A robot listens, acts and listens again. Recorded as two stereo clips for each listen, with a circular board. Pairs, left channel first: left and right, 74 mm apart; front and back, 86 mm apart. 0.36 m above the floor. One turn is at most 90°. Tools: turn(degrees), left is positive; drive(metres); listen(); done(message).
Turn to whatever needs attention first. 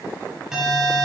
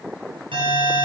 turn(degrees=-90)
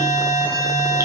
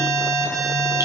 turn(degrees=-85)
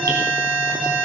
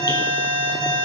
turn(degrees=-10)
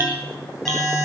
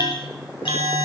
done("Found it: an alarm, straight ahead, over 4 m away.")